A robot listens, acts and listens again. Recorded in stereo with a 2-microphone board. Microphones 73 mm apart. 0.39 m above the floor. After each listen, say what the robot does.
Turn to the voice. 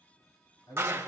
Turn 90° left.
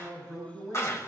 Facing the man speaking.